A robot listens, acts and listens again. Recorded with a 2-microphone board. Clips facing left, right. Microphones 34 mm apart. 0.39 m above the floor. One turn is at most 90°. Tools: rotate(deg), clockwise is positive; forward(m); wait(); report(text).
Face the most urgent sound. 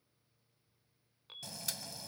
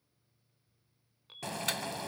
rotate(-30)
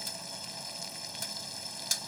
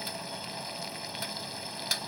wait()
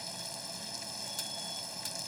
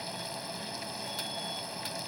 wait()
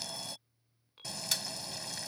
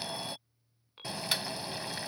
rotate(25)
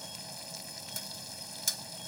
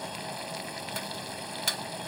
wait()
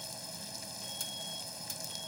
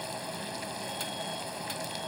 wait()
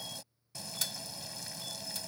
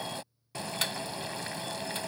report("Facing where the alarm came from. I can't hear it now.")